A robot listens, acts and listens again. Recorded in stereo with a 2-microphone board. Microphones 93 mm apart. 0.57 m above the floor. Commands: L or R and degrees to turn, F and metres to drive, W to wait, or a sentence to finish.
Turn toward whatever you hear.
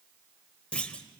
L30
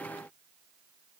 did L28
W
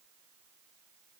I heard a clunk, but can't make it out now. It was about 15° right or 140° left.